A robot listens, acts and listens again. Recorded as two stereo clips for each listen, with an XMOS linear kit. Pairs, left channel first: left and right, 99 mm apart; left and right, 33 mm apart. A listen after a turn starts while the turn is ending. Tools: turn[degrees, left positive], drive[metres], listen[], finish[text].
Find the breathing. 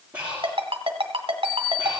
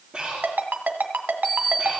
Action: turn[-30]
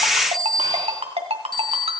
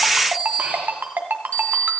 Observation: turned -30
Action: listen[]
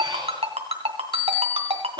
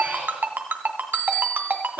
Action: listen[]
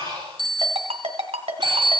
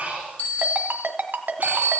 Thought: So it is at 135° right.
Action: turn[-135]
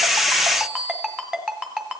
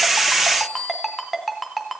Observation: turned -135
Action: listen[]
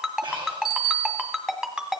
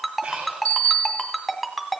Thought: The breathing is now 55° right.
Action: turn[-55]
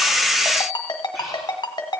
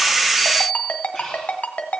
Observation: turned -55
Action: listen[]
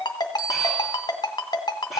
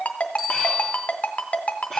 Action: listen[]
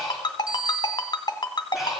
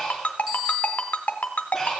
Action: finish[Facing the breathing, over 4 m away.]